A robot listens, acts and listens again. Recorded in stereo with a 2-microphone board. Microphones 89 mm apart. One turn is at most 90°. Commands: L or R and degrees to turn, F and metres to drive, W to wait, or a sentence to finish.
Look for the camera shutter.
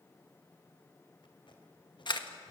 L60
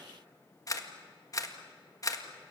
L45
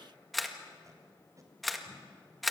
Facing the camera shutter, 1 to 2 m away.